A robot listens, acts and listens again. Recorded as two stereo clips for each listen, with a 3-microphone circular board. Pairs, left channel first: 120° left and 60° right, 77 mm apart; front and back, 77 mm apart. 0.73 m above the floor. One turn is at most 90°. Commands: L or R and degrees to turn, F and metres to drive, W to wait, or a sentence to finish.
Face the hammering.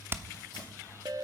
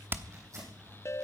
R90
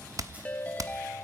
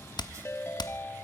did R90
R20
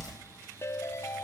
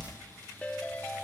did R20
Found it: hammering, straight ahead.